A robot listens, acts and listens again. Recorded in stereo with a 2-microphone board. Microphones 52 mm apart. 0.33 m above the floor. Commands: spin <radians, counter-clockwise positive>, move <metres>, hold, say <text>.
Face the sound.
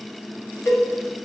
spin 1.22
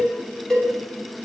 spin 0.26
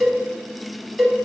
say Facing the cowbell, 1 to 2 m away.